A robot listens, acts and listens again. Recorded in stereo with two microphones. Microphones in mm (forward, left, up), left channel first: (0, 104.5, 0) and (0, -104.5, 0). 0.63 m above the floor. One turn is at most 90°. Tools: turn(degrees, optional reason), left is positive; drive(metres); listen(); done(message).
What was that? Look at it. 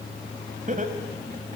turn(degrees=-35, reason="The laughter: about 35° right or 145° right.")
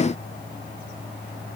listen()
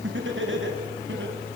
turn(degrees=-90, reason="So it is at 115° right.")
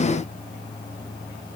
turn(degrees=-25, reason="Nothing new. It was at 25° right.")
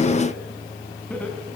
done("Facing the laughter, over 4 m away.")